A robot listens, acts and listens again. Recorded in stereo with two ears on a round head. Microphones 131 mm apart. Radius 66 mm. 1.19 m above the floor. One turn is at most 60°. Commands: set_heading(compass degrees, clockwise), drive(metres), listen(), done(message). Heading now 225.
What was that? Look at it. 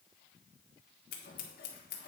set_heading(165)
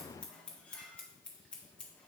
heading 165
done("Found it: scissors, straight ahead, 1 to 2 m away.")